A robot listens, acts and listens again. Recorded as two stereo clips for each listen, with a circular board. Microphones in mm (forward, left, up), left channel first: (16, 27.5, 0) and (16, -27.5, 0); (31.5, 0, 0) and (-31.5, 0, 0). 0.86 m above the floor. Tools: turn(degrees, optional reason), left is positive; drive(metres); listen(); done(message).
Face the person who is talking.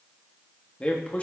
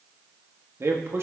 turn(degrees=145, reason="The man speaking: 145° left.")
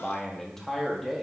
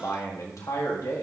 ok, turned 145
done("Facing the man speaking, 1 to 2 m away.")